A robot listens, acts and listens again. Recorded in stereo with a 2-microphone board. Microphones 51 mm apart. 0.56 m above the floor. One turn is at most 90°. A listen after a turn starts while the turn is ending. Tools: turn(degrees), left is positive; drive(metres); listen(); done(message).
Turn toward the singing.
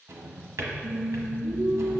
turn(degrees=-55)
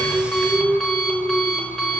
turn(degrees=-65)
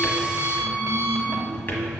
listen()
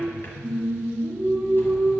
done("Facing the singing.")